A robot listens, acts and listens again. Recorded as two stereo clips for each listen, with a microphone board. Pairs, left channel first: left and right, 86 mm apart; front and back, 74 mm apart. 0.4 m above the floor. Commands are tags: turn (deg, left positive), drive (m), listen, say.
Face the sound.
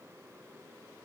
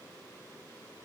<listen/>
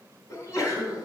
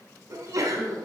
<turn deg="140"/>
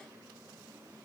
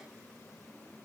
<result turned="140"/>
<say>I heard a sneeze from this way, but can't make it out now.</say>